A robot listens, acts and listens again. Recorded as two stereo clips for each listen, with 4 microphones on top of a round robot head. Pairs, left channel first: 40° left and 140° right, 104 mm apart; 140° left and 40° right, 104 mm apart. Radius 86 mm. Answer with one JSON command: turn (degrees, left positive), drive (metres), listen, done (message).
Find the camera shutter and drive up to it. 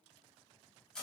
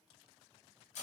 {"listen": true}
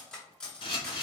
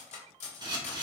{"drive": 1.0}
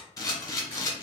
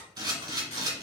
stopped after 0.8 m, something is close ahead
{"done": "Arrived at the camera shutter, straight ahead."}